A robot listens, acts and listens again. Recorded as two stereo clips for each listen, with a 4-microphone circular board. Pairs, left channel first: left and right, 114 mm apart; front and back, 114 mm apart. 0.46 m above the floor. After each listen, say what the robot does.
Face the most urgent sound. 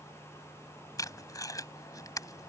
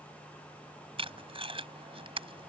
Keep listening.
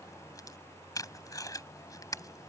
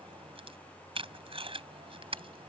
Keep listening.
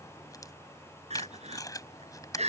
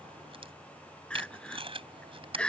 Turn 80° right.
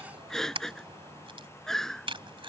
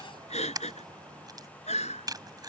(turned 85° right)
Found it: crying, straight ahead.